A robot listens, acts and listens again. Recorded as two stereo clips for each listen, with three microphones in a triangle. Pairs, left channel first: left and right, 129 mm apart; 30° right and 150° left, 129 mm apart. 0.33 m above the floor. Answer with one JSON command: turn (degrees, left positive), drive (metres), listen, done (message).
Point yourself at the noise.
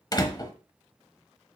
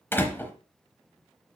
{"turn": 40}
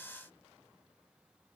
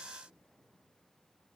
{"done": "I heard a door slam from this way, but can't make it out now."}